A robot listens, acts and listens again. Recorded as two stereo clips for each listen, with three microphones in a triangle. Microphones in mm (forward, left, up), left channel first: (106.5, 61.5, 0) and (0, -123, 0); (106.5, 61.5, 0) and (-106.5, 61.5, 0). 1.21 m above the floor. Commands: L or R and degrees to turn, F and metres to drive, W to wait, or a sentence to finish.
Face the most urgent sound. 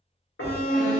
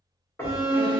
L115
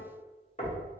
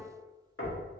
W
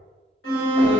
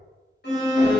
L40
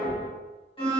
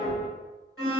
Facing the alarm.